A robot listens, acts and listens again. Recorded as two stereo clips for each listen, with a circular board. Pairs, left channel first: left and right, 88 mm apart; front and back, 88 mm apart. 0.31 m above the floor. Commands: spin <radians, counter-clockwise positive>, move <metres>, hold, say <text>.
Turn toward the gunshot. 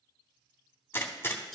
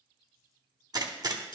spin 2.62
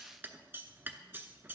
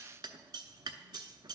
say Facing where the gunshot came from. I can't hear it now.